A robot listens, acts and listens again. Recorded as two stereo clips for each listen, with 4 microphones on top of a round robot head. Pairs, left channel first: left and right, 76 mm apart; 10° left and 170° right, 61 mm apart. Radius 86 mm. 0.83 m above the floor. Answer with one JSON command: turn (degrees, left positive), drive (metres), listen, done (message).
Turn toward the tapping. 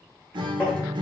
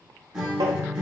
{"turn": 165}
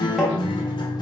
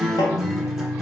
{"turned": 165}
{"done": "Found it: tapping, straight ahead, 1 to 2 m away."}